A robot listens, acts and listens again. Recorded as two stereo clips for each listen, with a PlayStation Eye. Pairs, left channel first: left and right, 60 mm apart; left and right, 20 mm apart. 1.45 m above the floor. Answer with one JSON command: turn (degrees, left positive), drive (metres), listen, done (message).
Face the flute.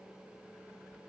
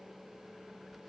{"listen": true}
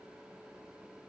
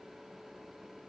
{"listen": true}
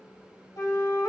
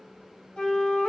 {"turn": 75}
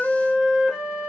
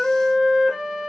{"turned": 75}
{"done": "Facing the flute, 1 to 2 m away."}